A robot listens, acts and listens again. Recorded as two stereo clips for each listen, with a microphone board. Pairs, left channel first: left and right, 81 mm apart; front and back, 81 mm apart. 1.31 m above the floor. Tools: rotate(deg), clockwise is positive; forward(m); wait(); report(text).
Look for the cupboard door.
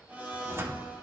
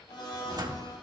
rotate(145)
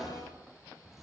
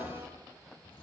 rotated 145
report("Found it: a cupboard door, straight ahead.")